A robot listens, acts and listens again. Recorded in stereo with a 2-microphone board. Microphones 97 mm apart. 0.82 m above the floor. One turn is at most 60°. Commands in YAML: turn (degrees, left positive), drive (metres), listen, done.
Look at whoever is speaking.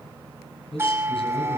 turn: 60
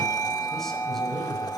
listen: true
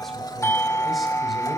listen: true
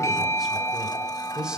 done: "Found it: a man speaking, straight ahead, over 4 m away."